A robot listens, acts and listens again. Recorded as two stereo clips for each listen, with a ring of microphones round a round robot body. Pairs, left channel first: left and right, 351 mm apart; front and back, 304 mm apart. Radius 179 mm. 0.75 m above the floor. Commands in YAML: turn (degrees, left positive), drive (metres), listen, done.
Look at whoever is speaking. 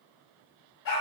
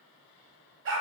listen: true
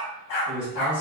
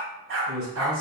turn: -165
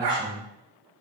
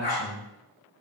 done: "Facing the man speaking, 2 to 4 m away."